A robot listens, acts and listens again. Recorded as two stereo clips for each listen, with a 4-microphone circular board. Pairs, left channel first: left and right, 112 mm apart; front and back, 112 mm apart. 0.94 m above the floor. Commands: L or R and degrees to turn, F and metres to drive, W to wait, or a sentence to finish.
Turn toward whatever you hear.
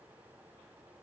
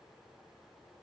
W
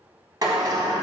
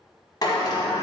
R45
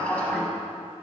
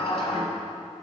L10
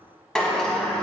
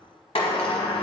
Facing the sliding door, 1 to 2 m away.